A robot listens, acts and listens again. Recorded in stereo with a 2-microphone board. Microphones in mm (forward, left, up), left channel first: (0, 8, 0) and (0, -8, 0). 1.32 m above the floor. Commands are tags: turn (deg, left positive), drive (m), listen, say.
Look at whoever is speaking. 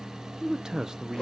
<turn deg="-55"/>
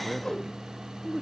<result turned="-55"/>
<turn deg="-10"/>
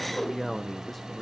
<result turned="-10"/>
<say>Found it: a man speaking, straight ahead, under 1 m away.</say>